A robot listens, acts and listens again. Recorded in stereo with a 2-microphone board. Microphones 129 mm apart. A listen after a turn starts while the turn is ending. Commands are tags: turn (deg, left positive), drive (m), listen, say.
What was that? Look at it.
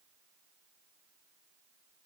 <listen/>
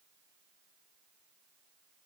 <listen/>
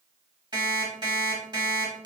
<turn deg="-40"/>
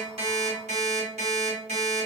<turn deg="-100"/>
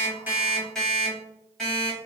<say>Found it: an alarm clock, straight ahead, 1 to 2 m away.</say>